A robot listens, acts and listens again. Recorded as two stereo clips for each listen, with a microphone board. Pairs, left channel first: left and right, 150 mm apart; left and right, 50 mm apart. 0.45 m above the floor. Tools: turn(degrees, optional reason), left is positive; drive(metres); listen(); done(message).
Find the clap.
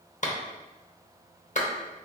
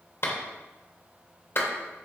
turn(degrees=55, reason="The clap: about 55° left or 125° left.")
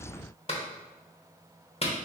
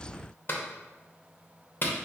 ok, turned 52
turn(degrees=50, reason="So it is at 50° left.")
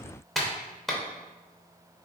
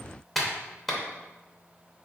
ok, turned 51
done("Facing the clap, under 1 m away.")